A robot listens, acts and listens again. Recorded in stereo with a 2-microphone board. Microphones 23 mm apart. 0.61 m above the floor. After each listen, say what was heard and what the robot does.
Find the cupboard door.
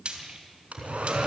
Turn 30° right.
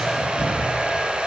So it is at 20° left. Turn 20° left.
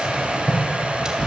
The cupboard door is now 10° left. Turn 10° left.
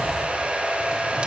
Keep listening.
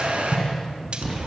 Found it: a cupboard door, straight ahead.